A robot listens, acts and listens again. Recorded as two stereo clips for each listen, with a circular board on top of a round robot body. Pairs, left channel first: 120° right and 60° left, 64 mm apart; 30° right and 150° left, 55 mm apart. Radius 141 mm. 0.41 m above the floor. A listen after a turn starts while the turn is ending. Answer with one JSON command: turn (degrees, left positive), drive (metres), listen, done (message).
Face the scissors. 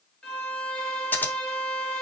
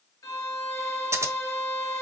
{"turn": 180}
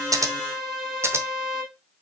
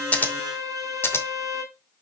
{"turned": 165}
{"turn": 15}
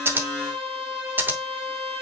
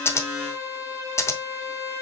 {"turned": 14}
{"done": "Found it: scissors, straight ahead."}